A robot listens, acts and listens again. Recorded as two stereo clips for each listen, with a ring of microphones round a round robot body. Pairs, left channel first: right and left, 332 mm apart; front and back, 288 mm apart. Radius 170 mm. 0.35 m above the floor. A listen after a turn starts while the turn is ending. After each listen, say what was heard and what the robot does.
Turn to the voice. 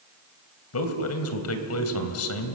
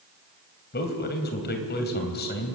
The man speaking: 55° right. Turn 55° right.
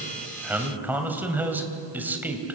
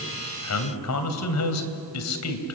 Facing the man speaking, 2 to 4 m away.